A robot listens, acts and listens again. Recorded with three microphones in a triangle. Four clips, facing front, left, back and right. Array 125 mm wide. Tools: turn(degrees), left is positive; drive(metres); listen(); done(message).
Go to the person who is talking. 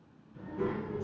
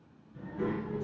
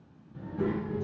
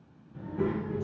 turn(degrees=-105)
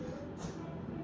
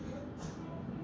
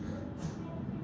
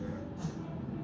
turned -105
turn(degrees=-40)
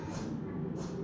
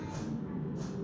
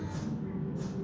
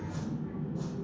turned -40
turn(degrees=-10)
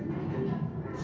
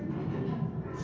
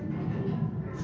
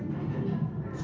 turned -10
drive(metres=1.0)
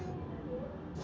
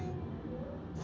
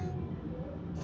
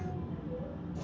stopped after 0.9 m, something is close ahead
turn(degrees=-10)
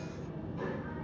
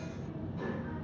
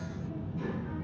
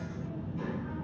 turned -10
done("I am next to the child speaking.")